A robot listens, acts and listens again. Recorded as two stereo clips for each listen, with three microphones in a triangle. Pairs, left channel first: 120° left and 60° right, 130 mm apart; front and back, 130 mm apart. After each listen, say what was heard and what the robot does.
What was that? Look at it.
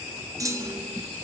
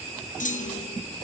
Found it: a clunk, straight ahead, under 1 m away.